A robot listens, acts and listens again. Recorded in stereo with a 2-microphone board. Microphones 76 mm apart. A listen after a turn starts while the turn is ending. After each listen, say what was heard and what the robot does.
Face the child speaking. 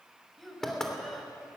Turn 30° left.
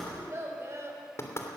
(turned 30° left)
So it is at 40° right. Turn 40° right.
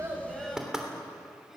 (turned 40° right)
Found it: a child speaking, straight ahead, over 4 m away.